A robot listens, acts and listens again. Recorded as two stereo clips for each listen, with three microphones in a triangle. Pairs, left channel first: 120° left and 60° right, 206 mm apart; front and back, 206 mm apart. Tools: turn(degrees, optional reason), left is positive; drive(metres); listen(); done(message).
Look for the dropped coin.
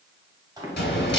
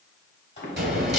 turn(degrees=150, reason="The dropped coin: 150° left.")
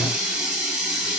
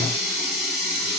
done("I heard a dropped coin from this way, but can't make it out now.")